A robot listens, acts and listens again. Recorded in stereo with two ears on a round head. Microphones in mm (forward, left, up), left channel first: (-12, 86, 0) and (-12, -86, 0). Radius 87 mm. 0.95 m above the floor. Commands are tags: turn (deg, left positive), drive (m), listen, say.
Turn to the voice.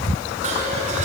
<listen/>
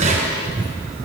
<listen/>
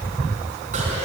<say>I can't make out anyone speaking, only dishes clattering.</say>